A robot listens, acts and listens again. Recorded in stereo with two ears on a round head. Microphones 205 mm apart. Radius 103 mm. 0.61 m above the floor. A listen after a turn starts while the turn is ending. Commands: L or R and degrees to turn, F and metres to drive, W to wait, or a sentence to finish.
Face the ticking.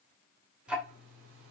R30
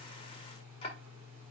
L30
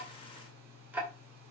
Facing the ticking.